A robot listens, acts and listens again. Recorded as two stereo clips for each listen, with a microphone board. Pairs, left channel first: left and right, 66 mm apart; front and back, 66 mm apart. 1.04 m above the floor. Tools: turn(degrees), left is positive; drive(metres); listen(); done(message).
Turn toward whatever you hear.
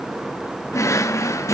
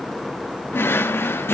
turn(degrees=50)
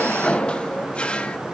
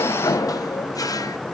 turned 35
turn(degrees=15)
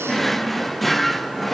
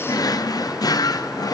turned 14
done("Facing the drawer.")